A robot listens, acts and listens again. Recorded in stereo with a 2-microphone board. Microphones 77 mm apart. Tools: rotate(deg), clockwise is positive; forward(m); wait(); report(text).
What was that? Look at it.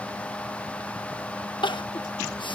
rotate(-90)
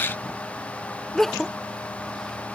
report("Facing the crying.")